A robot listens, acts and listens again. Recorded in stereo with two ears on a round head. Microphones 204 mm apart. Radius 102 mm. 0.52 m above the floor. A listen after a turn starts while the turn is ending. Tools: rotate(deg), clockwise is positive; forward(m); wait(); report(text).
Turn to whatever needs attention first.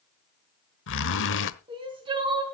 rotate(20)
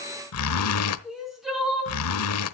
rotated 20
report("Found it: crying, straight ahead.")